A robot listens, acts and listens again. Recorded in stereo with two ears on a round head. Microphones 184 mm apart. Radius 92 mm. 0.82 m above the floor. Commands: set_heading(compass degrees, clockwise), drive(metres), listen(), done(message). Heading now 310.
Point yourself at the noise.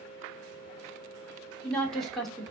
set_heading(280)
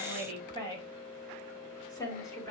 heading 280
set_heading(115)
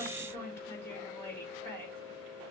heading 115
set_heading(105)
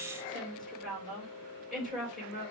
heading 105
done("Facing the woman speaking.")